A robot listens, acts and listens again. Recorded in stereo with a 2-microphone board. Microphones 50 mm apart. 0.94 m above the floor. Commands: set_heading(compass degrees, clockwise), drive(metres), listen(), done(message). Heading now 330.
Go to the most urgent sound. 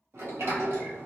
listen()
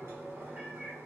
listen()
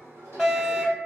set_heading(0)
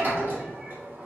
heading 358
listen()
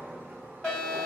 set_heading(338)
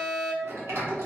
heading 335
drive(1.0)
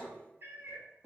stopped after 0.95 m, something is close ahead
listen()
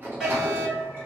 set_heading(350)
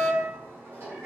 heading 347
done("Arrived at the fire alarm, straight ahead.")